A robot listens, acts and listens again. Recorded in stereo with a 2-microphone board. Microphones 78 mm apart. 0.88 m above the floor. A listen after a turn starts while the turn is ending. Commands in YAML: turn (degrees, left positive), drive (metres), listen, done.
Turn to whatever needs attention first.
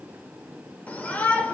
turn: 20
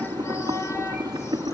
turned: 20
listen: true
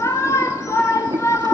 turn: 140
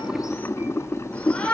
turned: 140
turn: 15
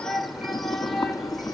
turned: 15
done: "Facing the shout."